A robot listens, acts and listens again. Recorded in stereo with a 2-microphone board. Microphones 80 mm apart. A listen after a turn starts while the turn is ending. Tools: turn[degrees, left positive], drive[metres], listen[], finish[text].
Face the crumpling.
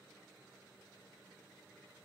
Action: listen[]
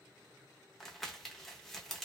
Action: turn[30]
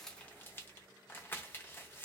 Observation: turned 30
Thought: So it is at 150° left.
Action: turn[150]
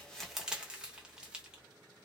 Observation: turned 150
Thought: The crumpling is now 10° right.
Action: turn[-10]
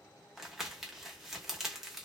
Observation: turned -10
Action: finish[Facing the crumpling.]